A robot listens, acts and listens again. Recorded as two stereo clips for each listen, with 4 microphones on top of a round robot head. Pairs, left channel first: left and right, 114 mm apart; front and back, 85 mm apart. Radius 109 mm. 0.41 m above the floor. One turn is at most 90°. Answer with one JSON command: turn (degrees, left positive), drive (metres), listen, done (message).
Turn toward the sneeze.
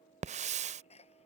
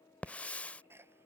{"turn": 90}
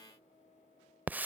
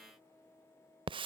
{"turn": 25}
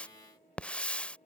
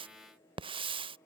{"done": "Facing where the sneeze came from. I can't hear it now."}